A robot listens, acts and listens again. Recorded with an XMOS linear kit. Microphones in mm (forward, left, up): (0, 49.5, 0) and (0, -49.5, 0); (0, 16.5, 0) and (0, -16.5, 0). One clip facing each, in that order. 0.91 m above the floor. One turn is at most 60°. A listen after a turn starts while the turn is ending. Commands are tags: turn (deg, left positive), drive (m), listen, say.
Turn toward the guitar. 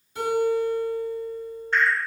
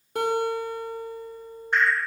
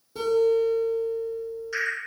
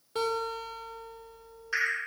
<turn deg="-55"/>
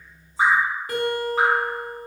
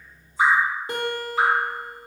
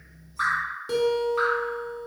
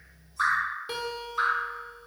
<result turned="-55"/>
<turn deg="-30"/>
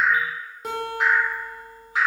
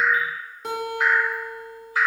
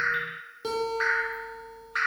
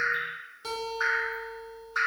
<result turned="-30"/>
<say>Found it: a guitar, straight ahead, under 1 m away.</say>